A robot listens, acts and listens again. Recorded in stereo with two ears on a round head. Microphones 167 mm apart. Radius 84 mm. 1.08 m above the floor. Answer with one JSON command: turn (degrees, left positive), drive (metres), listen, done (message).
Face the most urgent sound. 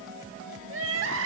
{"turn": -75}
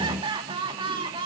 {"turn": -25}
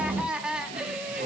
{"done": "Facing the crying."}